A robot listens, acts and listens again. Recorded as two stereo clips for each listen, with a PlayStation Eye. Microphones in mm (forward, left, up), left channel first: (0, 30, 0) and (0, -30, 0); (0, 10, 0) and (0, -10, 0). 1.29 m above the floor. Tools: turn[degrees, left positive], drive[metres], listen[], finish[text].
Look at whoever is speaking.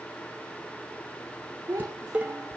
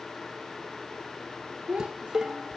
Thought: The child speaking: about 70° right or 110° right.
Action: turn[-70]
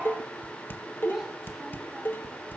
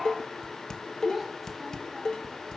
Action: finish[Facing the child speaking.]